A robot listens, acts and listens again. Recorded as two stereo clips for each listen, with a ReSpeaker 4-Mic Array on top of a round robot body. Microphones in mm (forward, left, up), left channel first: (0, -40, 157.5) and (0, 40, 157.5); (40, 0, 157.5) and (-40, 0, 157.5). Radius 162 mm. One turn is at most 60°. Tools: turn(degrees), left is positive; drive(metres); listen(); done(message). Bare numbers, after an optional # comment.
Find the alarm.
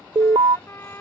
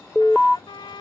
# The alarm: 95° left.
turn(60)
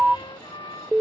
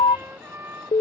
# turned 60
done("Found it: an alarm, straight ahead.")